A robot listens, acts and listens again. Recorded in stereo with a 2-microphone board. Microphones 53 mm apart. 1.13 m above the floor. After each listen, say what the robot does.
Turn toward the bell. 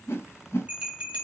Turn 25° right.
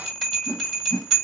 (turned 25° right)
Facing the bell, 2 to 4 m away.